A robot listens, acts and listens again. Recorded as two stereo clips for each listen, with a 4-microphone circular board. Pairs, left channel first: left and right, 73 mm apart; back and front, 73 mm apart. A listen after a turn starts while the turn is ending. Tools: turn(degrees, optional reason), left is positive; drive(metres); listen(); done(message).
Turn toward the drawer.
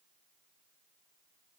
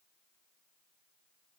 listen()
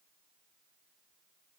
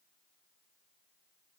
listen()
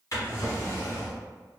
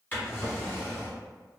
turn(degrees=120, reason="The drawer: 120° left.")
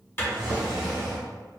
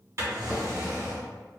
turn(degrees=-15, reason="The drawer is now 15° right.")
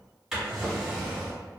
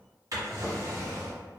turn(degrees=-10, reason="The drawer is now 10° right.")
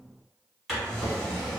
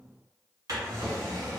done("Facing the drawer.")